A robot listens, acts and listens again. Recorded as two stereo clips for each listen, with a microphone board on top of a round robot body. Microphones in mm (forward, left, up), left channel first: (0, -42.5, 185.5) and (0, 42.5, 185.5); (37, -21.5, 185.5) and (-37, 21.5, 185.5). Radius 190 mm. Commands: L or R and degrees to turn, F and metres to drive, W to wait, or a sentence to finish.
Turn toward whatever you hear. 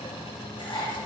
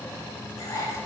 R75
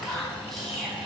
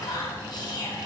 Facing the whispering.